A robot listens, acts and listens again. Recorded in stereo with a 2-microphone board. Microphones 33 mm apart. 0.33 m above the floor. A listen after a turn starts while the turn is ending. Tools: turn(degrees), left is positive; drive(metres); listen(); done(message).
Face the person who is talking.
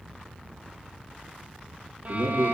turn(degrees=-70)
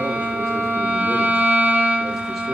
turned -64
listen()
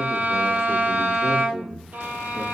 turn(degrees=-15)
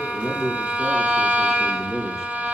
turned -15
done("Facing the man speaking.")